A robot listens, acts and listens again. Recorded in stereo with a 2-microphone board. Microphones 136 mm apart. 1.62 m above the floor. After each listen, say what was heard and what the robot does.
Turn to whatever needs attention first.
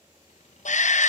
The shout: about 60° left or 120° left. Turn 60° left.
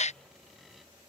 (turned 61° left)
So it is at 55° left. Turn 55° left.
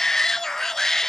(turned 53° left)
Found it: a shout, straight ahead.